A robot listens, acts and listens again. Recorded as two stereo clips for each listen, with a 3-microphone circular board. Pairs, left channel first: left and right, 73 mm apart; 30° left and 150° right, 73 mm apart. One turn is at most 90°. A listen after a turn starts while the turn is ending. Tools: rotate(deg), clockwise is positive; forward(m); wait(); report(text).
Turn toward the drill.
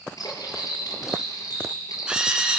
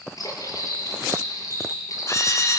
rotate(10)
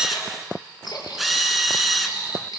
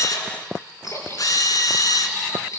report("Facing the drill, 1 to 2 m away.")